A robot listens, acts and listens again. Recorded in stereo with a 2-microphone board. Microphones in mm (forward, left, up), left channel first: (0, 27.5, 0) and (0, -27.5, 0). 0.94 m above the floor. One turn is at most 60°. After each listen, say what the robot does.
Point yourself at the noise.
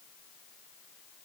Keep listening.
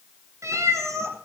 Turn 60° right.
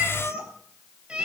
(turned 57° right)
Turn 20° right.
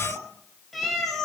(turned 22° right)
Found it: a cat meowing, straight ahead.